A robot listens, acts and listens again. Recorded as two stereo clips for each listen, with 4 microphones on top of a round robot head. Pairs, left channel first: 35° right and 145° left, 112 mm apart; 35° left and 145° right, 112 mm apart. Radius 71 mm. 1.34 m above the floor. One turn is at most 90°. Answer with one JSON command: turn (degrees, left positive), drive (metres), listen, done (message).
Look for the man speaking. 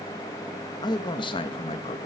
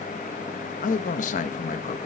{"turn": 10}
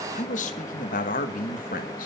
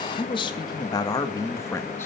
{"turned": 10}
{"turn": -35}
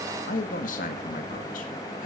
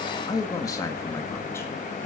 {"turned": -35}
{"turn": -40}
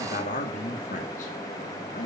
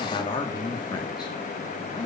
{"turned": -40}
{"turn": -20}
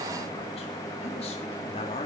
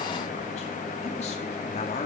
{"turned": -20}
{"done": "Facing the man speaking."}